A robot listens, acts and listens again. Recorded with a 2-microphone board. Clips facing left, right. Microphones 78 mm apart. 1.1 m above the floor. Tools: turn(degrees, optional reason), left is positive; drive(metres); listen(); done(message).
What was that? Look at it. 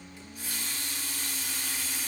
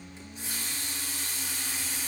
turn(degrees=-25, reason="The running tap: about 25° right or 155° right.")
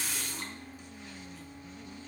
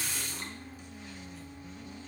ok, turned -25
done("Facing the running tap.")